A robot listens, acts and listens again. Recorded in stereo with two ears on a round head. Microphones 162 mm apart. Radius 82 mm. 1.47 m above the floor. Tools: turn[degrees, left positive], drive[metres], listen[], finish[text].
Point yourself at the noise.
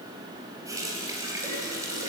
Thought: The running tap: about 20° right or 160° right.
Action: turn[-20]
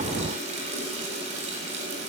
Thought: So it is at 140° right.
Action: turn[-140]
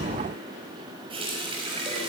Thought: The running tap is now 30° right.
Action: turn[-30]
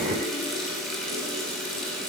Action: finish[Found it: a running tap, straight ahead.]